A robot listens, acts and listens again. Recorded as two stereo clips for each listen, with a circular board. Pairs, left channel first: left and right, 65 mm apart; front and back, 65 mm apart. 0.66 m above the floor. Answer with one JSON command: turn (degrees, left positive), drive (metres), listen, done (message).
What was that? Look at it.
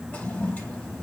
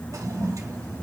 {"turn": 160}
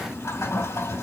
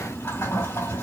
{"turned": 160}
{"turn": 55}
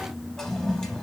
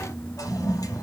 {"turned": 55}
{"turn": 10}
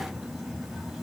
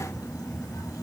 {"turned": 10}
{"listen": true}
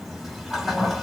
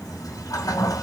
{"done": "Found it: a toilet flushing, straight ahead."}